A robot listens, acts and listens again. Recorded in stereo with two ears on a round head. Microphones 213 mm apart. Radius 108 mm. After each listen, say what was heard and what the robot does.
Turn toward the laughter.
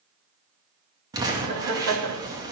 The laughter: about 70° right or 110° right. Turn 70° right.
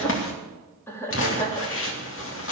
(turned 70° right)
So it is at 15° left. Turn 15° left.
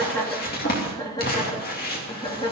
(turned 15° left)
The laughter is now 20° left. Turn 20° left.
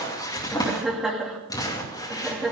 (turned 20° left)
Found it: laughter, straight ahead, 2 to 4 m away.